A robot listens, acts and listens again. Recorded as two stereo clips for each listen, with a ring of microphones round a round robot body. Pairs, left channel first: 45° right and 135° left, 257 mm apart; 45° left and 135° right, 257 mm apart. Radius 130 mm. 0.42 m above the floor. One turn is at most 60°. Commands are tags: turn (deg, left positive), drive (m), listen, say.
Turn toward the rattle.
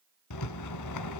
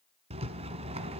<turn deg="-60"/>
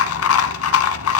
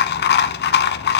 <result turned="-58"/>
<turn deg="-10"/>
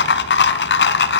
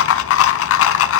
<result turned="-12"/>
<say>Found it: a rattle, straight ahead, 1 to 2 m away.</say>